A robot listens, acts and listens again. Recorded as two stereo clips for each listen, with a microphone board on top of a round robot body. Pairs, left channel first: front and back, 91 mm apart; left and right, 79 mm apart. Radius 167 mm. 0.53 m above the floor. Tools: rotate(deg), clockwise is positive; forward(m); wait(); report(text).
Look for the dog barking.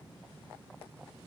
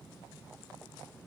wait()
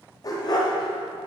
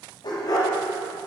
rotate(-45)
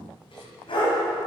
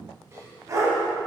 rotate(35)
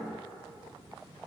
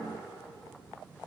wait()
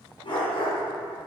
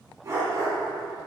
rotate(35)
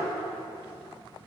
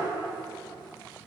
wait()
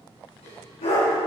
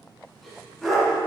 report("Found it: a dog barking, straight ahead.")